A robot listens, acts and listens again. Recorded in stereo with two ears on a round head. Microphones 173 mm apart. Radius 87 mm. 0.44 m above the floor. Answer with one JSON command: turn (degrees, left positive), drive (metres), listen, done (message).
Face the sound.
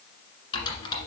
{"turn": 25}
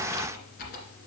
{"turn": 130}
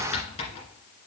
{"turn": 35}
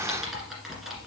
{"done": "Facing the typing on a keyboard, 1 to 2 m away."}